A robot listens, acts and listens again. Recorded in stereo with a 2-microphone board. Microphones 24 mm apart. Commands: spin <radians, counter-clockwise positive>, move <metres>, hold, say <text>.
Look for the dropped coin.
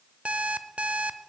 hold
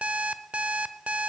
hold
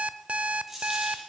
spin -0.52
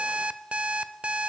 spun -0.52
hold
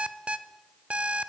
say I heard a dropped coin, but can't make it out now. It was about 15° left or 135° right.